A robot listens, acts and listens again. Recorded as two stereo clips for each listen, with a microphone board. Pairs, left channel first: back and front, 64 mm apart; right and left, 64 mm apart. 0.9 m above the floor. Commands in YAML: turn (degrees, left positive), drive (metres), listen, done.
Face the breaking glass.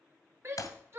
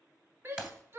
turn: 165
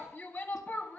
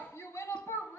done: "Facing where the breaking glass came from. I can't hear it now."